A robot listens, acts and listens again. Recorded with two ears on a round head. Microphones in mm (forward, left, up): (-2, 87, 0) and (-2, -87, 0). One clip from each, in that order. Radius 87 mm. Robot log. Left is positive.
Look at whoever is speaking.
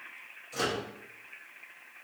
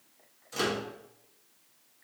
cmd idle
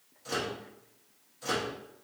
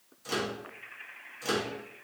cmd idle
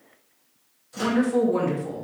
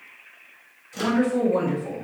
note: The woman speaking: about 15° left or 165° left.
cmd yaw +15
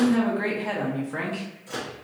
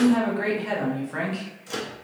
end: Found it: a woman speaking, straight ahead.